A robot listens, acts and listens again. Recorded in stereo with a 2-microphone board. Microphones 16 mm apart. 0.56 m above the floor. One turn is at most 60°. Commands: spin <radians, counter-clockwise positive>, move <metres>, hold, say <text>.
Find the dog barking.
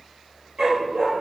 spin -0.96
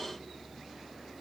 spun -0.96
hold
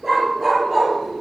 spin -0.17
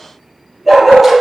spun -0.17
say Found it: a dog barking, straight ahead.